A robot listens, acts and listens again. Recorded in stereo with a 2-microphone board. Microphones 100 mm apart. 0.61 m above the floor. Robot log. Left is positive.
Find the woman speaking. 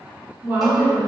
note: The woman speaking: about 30° right or 150° right.
cmd yaw -30
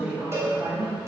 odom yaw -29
note: The woman speaking: about 25° right or 155° right.
cmd yaw -25
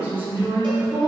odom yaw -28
note: The woman speaking: about 30° right or 150° right.
cmd yaw -30
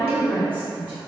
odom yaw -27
note: The woman speaking: about 20° right or 160° right.
cmd yaw -20
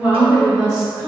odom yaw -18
note: So it is at 15° right.
cmd yaw -15
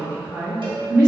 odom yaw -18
end: Facing the woman speaking, 2 to 4 m away.